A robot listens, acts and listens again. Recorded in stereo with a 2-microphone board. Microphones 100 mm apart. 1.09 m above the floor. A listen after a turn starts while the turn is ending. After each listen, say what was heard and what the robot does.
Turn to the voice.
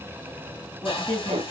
Turn 30° left.
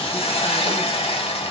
Keep listening.
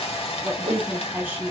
So it is at 20° right. Turn 20° right.
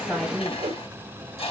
Facing the woman speaking.